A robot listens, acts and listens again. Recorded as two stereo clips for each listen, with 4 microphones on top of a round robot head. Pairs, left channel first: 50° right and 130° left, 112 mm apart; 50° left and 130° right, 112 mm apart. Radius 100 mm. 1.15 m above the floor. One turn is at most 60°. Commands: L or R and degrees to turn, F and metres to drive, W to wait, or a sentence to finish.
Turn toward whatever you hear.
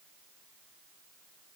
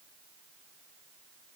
W
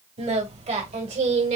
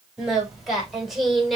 L60
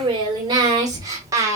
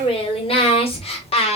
L60
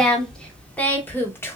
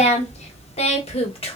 L15
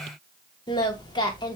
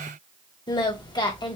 Found it: singing, straight ahead.